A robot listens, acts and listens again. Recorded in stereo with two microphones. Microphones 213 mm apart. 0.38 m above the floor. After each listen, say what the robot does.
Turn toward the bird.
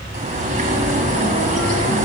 Turn 40° right.
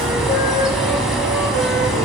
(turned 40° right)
Found it: a bird, straight ahead.